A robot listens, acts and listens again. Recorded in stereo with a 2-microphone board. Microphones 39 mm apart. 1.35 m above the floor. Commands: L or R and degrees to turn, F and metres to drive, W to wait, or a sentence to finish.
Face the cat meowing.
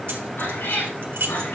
L75
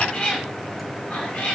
L40
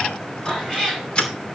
L15
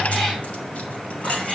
L10
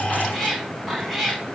Found it: a cat meowing, straight ahead, over 4 m away.